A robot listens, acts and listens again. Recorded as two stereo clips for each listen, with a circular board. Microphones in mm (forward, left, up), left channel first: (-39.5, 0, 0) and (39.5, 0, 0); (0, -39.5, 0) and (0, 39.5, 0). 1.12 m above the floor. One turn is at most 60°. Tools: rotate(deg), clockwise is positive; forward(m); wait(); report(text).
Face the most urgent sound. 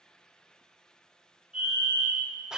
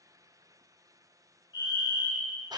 rotate(60)
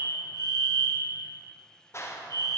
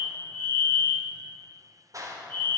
rotate(30)
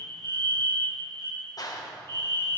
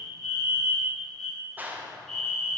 rotate(10)
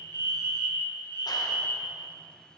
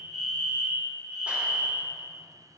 report("Found it: a fire alarm, straight ahead.")